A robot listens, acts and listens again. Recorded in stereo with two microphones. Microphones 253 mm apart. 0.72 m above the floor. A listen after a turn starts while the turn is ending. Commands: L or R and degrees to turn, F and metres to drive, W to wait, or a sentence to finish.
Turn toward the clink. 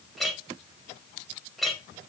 L30
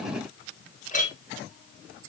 L150
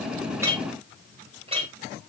R20
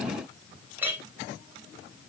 Facing the clink, 2 to 4 m away.